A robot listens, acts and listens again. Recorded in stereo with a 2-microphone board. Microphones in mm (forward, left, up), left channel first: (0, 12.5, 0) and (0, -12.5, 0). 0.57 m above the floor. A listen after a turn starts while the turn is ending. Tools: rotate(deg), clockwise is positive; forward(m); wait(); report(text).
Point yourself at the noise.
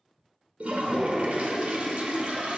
rotate(75)
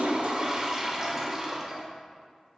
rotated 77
rotate(25)
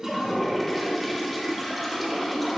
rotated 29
report("Found it: a toilet flushing, straight ahead, under 1 m away.")